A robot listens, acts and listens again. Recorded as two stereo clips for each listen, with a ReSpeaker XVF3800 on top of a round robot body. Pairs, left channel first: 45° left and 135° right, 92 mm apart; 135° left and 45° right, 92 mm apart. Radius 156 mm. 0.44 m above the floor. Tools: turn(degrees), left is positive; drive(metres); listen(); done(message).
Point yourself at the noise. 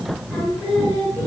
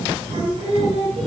turn(degrees=-25)
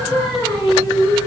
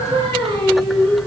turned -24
done("Facing the singing.")